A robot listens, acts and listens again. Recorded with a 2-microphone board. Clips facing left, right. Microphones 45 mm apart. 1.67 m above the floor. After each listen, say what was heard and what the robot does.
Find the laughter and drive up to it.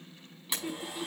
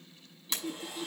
The laughter: about 65° left or 115° left. Turn 65° left.
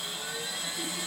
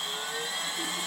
Keep listening.
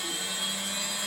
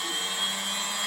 Keep listening.
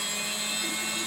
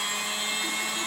I heard laughter, but can't make it out now. It was about straight ahead or 50° left. I did not reach it.